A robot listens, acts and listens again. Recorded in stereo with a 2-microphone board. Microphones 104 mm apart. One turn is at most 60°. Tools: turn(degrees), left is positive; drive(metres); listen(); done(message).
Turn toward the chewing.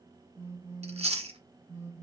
turn(degrees=-60)
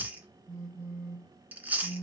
turn(degrees=-15)
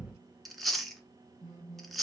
done("Facing the chewing.")